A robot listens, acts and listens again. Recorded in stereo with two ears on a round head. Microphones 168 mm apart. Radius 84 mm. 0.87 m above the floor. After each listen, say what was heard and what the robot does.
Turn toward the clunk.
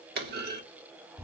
The clunk: about 55° right or 125° right. Turn 55° right.
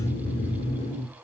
Keep listening.
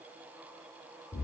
I heard a clunk, but can't make it out now. It was about straight ahead or 70° right.